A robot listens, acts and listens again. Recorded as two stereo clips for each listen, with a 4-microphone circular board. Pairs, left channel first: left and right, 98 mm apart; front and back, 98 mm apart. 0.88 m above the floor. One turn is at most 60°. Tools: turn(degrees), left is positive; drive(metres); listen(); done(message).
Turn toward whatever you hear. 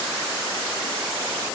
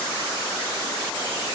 listen()
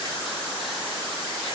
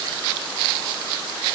listen()
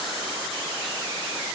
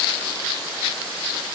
done("I can't make out anything.")